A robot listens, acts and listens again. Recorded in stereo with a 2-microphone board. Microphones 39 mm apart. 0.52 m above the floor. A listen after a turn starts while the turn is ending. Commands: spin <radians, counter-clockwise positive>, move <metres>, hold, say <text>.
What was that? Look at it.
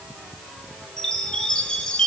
spin 0.35
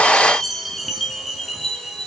say Facing the chime, 1 to 2 m away.